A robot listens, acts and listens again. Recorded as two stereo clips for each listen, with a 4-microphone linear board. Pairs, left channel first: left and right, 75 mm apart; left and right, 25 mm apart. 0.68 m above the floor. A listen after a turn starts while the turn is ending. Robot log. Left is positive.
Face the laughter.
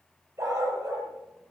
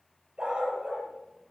cmd idle
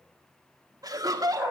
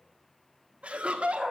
note: The laughter: about 55° right or 125° right.
cmd yaw -55
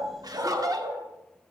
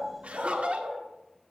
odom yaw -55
note: So it is at 55° right.
cmd yaw -55
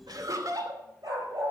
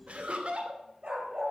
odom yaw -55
note: The laughter is now 55° right.
cmd yaw -55
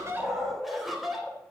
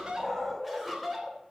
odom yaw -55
end: Found it: laughter, straight ahead, 2 to 4 m away.